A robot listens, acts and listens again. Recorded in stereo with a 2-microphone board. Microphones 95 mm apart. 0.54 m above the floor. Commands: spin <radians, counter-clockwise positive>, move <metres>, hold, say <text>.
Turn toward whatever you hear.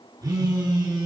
spin -0.70
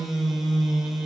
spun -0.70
say Found it: a phone buzzing, straight ahead, 2 to 4 m away.